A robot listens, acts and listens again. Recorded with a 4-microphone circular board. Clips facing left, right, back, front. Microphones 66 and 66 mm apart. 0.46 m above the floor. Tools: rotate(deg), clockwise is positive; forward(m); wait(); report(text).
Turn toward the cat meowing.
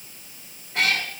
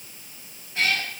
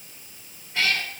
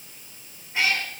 rotate(-70)
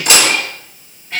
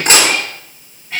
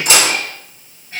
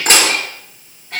report("Found it: a cat meowing, straight ahead, 2 to 4 m away.")